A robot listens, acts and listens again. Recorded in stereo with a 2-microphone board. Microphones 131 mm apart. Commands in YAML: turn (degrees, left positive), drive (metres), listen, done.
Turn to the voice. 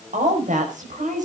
turn: -75
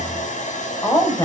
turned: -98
turn: 25
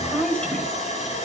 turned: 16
turn: 10
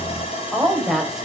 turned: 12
done: "Facing the woman speaking, over 4 m away."